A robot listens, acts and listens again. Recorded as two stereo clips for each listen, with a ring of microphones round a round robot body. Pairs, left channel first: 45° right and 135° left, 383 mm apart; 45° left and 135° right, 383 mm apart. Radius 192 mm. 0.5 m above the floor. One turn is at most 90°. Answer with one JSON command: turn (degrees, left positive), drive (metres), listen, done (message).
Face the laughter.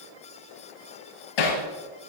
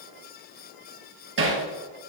{"listen": true}
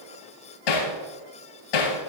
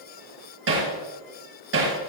{"listen": true}
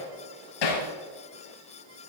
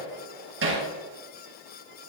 {"done": "I can't make out laughter to turn to."}